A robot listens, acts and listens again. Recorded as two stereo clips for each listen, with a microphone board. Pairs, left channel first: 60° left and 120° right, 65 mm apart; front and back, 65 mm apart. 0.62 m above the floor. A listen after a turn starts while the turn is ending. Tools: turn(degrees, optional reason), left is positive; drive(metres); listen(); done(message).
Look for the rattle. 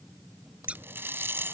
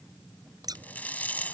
turn(degrees=-65, reason="The rattle: 65° right.")
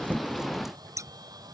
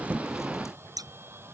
listen()
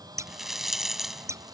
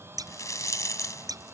turn(degrees=-35, reason="The rattle is now 35° right.")
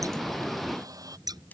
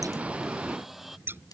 listen()
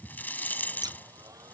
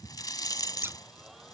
done("Facing the rattle.")